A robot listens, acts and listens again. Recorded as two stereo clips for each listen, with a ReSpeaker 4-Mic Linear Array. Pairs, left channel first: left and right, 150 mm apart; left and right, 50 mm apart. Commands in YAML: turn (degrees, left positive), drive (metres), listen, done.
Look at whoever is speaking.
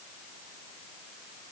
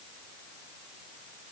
listen: true
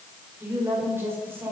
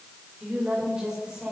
turn: -30
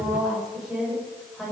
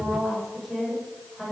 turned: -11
turn: 30
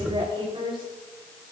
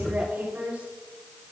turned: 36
turn: -35
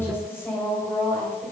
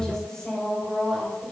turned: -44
turn: 15
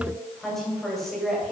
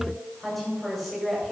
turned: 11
done: "Facing the woman speaking."